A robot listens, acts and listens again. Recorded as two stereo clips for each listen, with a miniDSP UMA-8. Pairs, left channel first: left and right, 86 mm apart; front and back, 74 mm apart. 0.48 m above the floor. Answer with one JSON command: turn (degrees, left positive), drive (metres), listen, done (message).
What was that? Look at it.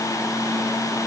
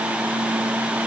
{"listen": true}
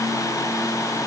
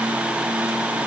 {"listen": true}
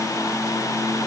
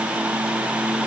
{"done": "I can't make out anything."}